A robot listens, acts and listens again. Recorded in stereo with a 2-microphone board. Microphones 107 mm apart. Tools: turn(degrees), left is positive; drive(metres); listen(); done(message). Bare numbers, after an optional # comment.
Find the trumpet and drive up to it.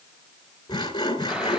listen()
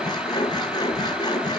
listen()
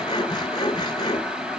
done("I can't make out a trumpet to turn to.")